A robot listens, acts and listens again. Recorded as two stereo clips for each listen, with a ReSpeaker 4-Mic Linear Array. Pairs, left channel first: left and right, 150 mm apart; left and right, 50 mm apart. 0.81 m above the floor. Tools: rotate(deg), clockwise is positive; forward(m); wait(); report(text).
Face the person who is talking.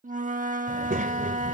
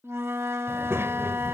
rotate(65)
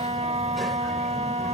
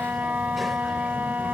wait()
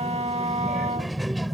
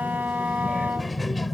report("Found it: a child speaking, straight ahead.")